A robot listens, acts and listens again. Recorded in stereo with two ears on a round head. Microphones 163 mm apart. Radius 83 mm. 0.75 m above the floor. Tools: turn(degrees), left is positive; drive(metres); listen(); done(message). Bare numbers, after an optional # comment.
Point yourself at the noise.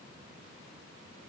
listen()
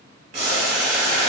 # The boiling: about 20° right or 160° right.
turn(-20)
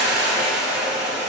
done("Facing the boiling, 1 to 2 m away.")